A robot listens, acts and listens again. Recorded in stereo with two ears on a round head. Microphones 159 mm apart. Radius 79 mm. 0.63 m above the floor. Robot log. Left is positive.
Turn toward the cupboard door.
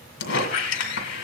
cmd idle
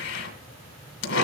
cmd idle
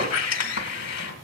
end: I can't make out a cupboard door, only a squeak.